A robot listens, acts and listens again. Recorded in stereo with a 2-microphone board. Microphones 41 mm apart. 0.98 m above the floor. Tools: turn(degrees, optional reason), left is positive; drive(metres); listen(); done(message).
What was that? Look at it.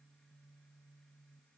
listen()
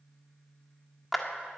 turn(degrees=30)
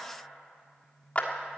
turn(degrees=145, reason="So it is at 145° left.")
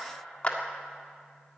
turn(degrees=30, reason="The clap is now 30° left.")
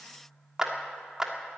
turn(degrees=-15, reason="The clap is now 15° right.")
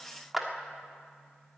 done("Found it: a clap, straight ahead.")